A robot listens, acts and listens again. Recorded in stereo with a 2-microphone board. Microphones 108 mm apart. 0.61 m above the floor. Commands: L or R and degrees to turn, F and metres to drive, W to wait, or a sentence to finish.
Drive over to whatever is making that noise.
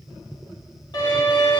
L45
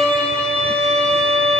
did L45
L10
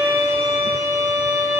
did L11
F1.0
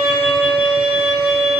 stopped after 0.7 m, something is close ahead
I am next to the violin.